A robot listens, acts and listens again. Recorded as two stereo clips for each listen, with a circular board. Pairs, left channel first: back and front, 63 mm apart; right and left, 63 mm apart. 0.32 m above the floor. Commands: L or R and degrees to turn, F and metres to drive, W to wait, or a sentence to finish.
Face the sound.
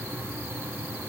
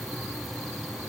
W
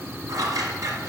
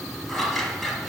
R10
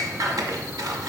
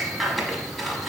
Facing the scissors, under 1 m away.